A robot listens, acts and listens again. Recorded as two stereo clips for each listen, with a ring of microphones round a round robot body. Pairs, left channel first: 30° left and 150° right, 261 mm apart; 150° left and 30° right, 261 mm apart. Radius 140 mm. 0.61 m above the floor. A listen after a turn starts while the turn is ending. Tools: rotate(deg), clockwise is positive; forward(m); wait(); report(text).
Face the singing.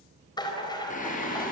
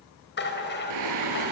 rotate(30)
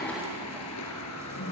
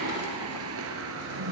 rotate(-10)
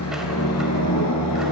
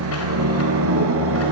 rotate(-10)
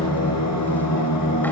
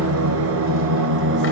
rotate(-15)
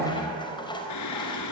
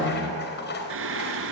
rotate(-10)
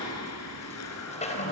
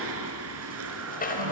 report("Facing the singing, 2 to 4 m away.")